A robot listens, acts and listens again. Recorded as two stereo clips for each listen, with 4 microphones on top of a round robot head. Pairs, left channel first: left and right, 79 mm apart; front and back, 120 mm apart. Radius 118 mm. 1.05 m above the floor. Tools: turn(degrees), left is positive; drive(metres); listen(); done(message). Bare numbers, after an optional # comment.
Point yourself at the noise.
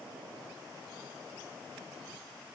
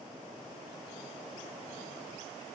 listen()
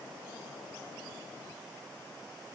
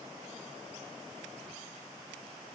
listen()
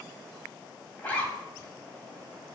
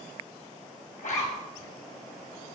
# The zipper: 20° left.
turn(20)
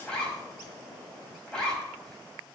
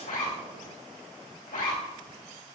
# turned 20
done("Found it: a zipper, straight ahead, 2 to 4 m away.")